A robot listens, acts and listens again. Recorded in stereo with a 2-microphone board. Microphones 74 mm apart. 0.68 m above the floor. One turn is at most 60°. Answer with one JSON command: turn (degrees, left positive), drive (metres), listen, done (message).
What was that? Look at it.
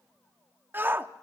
{"turn": -25}
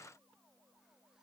{"listen": true}
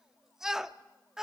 {"done": "Facing the shout, under 1 m away."}